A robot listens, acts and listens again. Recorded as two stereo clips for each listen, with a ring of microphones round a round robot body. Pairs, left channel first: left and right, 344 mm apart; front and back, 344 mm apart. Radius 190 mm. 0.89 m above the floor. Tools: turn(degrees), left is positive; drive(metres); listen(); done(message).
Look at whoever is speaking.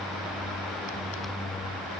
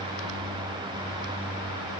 listen()
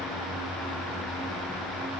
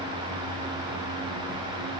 listen()
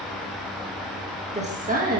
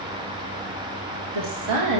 turn(degrees=-150)
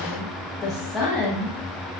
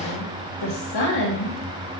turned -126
done("Facing the woman speaking, 1 to 2 m away.")